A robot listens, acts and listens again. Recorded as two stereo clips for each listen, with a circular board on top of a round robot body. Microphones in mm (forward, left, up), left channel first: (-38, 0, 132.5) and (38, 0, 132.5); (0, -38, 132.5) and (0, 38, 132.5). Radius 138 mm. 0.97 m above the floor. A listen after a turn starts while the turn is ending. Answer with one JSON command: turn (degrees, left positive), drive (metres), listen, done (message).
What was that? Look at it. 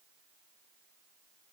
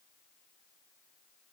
{"listen": true}
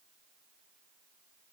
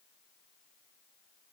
{"listen": true}
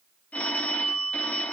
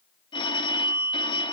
{"turn": -105}
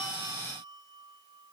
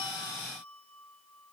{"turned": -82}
{"turn": -25}
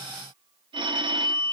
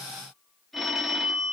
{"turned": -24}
{"done": "Found it: a phone ringing, straight ahead, 1 to 2 m away."}